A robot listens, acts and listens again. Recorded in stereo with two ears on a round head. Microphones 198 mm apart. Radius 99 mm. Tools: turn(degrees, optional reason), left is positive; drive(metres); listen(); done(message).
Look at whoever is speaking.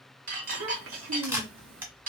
turn(degrees=-65, reason="The child speaking: about 65° right or 115° right.")
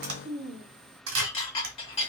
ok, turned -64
turn(degrees=-45, reason="So it is at 45° right.")
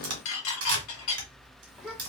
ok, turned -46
done("Found it: a child speaking, straight ahead, 1 to 2 m away.")